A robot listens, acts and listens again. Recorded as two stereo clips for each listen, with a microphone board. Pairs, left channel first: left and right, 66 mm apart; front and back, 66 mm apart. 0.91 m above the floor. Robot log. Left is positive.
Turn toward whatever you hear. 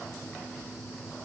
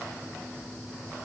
cmd idle
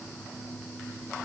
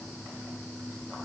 cmd idle
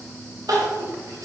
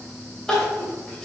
note: The crying: 80° right.
cmd yaw -80
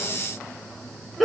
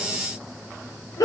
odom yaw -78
end: Facing the crying.